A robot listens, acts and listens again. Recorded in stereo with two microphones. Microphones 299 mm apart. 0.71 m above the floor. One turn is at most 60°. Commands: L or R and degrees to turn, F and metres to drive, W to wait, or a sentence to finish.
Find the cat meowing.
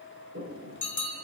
W
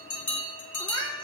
R30
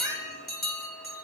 R60
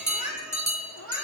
R60
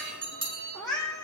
L15
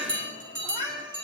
Facing the cat meowing, over 4 m away.